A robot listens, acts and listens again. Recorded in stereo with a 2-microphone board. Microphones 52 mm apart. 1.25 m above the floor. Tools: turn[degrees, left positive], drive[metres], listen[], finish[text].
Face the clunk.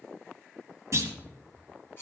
Thought: The clunk: about 60° right or 120° right.
Action: turn[-60]
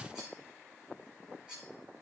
Action: listen[]
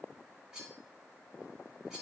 Action: finish[I heard a clunk, but can't make it out now. It was about straight ahead or 60° right.]